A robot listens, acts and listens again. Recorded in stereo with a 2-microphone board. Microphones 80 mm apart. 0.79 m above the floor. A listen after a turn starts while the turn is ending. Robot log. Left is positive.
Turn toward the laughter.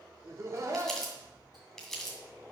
note: The laughter: about 45° right or 135° right.
cmd yaw -45
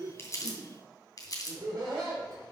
note: So it is at 50° right.
cmd yaw -50
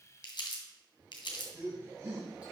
note: The laughter is now 30° right.
cmd yaw -30
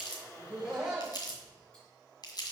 end: Facing the laughter.